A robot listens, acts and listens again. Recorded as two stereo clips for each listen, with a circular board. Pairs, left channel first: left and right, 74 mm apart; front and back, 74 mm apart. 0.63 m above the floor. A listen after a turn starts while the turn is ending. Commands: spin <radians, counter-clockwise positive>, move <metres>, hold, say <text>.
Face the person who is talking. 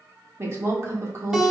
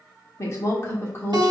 spin -0.96
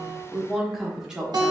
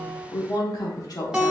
spin -0.26
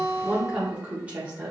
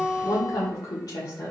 spin -0.52
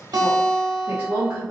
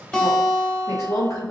spin -0.61
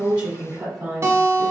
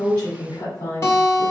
say Facing the woman speaking.